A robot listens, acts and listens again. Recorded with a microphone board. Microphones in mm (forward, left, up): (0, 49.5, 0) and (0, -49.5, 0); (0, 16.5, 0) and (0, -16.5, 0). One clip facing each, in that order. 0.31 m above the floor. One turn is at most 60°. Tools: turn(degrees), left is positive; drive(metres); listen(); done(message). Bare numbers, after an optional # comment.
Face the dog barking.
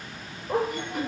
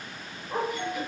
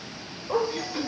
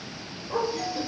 turn(60)
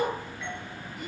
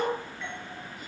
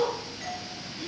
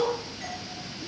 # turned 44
# So it is at 25° left.
turn(25)
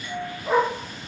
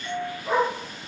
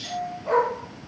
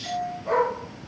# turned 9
# The dog barking is now 10° left.
turn(10)
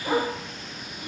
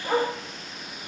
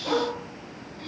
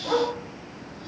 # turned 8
done("Found it: a dog barking, straight ahead, over 4 m away.")